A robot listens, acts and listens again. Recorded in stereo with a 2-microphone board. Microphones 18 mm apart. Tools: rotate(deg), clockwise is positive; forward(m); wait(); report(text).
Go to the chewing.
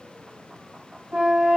wait()
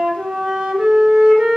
wait()
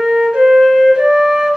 report("I can't make out chewing to turn to.")